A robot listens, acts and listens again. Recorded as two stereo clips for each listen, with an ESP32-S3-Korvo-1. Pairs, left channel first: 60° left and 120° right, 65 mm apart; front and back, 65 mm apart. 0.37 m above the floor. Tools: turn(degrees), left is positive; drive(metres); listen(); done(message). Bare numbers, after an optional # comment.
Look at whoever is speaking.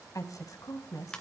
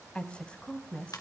# The woman speaking: 75° left.
turn(75)
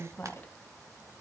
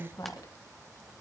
done("Facing the woman speaking, 2 to 4 m away.")